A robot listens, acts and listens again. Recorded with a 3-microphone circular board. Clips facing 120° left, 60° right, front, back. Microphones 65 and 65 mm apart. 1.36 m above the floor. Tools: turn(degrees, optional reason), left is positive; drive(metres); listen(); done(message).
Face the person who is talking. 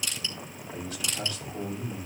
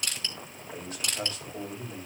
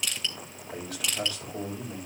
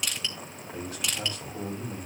turn(degrees=-10, reason="The man speaking: 10° right.")
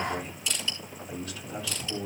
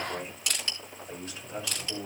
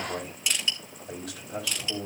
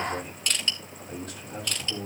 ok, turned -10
done("Facing the man speaking, over 4 m away.")